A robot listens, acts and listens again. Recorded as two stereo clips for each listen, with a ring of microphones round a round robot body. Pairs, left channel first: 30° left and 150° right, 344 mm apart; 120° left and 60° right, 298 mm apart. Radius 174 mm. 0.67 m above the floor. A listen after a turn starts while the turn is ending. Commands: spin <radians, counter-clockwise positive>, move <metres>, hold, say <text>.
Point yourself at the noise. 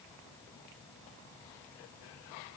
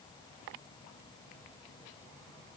hold
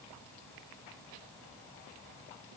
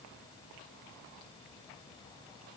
hold
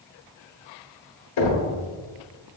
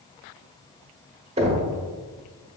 spin 0.17
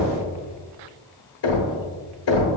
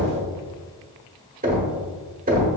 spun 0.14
say Found it: knocking, straight ahead.